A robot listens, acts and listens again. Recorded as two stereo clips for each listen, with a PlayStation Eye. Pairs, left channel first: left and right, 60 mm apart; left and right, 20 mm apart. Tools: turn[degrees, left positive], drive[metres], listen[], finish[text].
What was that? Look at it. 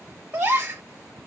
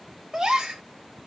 Thought: The gasp: about 30° right or 150° right.
Action: turn[-30]
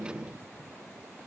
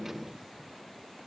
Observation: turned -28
Action: listen[]
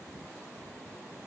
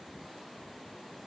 Action: finish[I heard a gasp, but can't make it out now. It was about 5° right or 120° right.]